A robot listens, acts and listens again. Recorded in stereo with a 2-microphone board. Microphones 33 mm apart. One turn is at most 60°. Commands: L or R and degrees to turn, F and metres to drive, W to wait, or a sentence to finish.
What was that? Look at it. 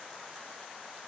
W
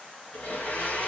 L60
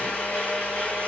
L55
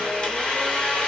L30
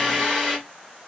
Found it: a blender, straight ahead.